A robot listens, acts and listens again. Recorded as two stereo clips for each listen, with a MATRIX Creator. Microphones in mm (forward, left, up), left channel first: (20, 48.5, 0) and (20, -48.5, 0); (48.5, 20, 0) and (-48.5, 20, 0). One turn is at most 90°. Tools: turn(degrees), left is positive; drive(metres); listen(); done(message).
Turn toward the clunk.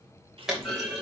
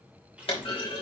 done("Facing the clunk, 2 to 4 m away.")